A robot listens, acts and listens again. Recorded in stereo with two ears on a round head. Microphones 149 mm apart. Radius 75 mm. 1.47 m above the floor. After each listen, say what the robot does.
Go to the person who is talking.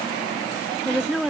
Turn 30° left.
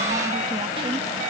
Keep listening.
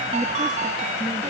Keep listening.
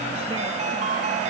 I heard a woman speaking, but can't make it out now. It was about 30° right or 150° left. I did not reach it.